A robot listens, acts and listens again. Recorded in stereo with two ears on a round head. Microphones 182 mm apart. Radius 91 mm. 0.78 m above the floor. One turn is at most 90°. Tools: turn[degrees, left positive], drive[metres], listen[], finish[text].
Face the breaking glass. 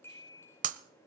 Thought: The breaking glass: about 40° right or 140° right.
Action: turn[-40]
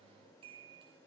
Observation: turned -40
Action: listen[]
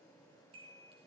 Action: finish[I heard breaking glass, but can't make it out now. It was about straight ahead or 100° right.]